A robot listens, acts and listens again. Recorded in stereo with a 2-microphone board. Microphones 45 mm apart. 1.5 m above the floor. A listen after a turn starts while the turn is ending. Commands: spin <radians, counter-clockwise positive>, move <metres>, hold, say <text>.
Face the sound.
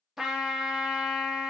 spin -0.52
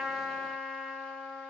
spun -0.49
spin 0.26
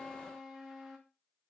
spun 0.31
say Facing the trumpet.